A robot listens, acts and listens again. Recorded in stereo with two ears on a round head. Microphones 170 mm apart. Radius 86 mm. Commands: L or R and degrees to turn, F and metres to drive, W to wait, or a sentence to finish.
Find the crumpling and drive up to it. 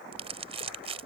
R35
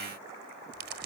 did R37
R105
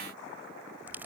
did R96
R10
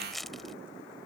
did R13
F1.0
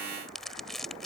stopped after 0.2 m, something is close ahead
Blocked. The crumpling is further on, straight ahead.